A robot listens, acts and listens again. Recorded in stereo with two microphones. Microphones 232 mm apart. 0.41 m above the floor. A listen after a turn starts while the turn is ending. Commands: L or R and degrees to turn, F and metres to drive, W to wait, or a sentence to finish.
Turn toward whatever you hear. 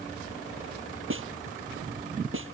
R60
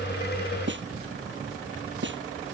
R55
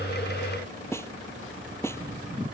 L10
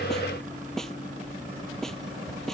Found it: a snare drum, straight ahead.